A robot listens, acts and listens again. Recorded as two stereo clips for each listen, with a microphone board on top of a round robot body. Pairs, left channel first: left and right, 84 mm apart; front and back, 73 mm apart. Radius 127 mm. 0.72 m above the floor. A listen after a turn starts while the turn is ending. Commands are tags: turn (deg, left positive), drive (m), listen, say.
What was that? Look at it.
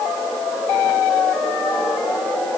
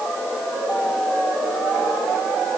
<listen/>
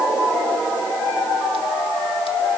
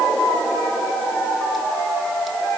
<listen/>
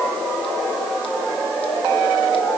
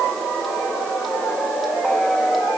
<say>I can't make out anything.</say>